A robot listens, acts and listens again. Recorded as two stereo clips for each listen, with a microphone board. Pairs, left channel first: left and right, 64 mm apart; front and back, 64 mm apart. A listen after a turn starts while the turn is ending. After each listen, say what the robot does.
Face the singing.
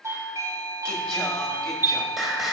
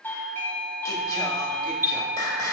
Found it: singing, straight ahead.